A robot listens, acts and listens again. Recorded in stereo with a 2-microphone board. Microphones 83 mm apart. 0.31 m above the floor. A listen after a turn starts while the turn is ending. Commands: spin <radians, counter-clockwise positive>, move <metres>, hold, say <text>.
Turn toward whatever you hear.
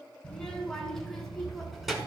spin -0.52
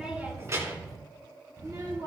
spin -2.36
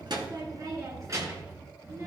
spin -0.61
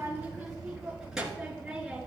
spin -0.17
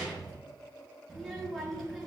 say Facing the child speaking.